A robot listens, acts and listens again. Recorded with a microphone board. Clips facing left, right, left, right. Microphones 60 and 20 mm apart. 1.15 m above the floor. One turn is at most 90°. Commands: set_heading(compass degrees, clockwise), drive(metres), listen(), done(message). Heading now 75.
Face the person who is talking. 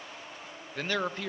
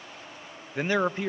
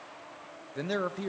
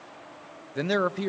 set_heading(95)
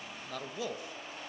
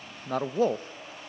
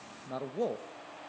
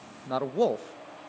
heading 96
set_heading(186)
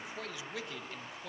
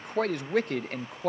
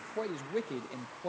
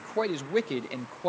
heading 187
set_heading(237)
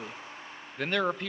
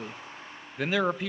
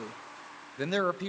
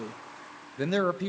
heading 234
done("Found it: a man speaking, straight ahead, under 1 m away.")